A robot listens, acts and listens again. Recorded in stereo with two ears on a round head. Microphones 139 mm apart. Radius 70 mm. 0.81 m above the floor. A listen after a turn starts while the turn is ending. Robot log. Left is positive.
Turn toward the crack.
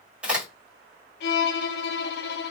cmd yaw -30
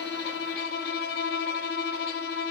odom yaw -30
cmd idle
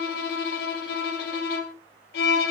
end: I heard a crack, but can't make it out now. It was about 20° left or 140° right.